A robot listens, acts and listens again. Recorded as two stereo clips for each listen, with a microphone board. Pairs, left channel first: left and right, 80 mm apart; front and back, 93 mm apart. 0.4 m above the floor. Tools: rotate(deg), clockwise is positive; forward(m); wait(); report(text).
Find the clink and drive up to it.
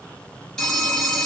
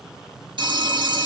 wait()
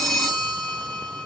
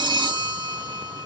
wait()
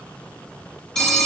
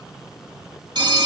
report("I can't make out a clink, only a phone ringing.")